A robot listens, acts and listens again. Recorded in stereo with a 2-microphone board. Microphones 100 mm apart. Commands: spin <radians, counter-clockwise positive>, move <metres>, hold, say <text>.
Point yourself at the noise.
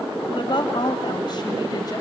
spin 0.87
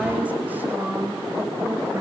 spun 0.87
spin -0.35
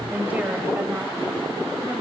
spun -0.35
spin -0.26
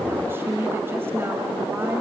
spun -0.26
spin -0.44
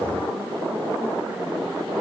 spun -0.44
hold
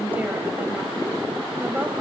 spin -0.26
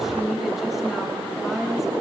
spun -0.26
say Facing the woman speaking.